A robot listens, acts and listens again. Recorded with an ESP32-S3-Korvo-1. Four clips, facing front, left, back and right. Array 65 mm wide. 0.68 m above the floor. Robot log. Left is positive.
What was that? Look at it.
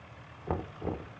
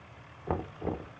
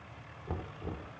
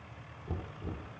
note: The knocking: 55° left.
cmd yaw +55
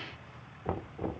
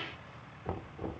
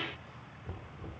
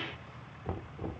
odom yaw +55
end: Facing the knocking.